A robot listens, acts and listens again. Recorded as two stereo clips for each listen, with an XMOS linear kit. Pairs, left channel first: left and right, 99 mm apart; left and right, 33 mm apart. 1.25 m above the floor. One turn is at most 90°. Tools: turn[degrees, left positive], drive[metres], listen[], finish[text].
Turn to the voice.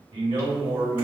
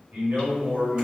Thought: The man speaking: about 60° right or 120° right.
Action: turn[-60]
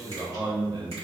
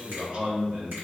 Thought: So it is at 55° right.
Action: turn[-55]
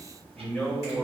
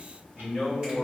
Thought: The man speaking is now 10° left.
Action: turn[10]
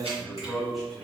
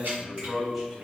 Action: finish[Facing the man speaking, 1 to 2 m away.]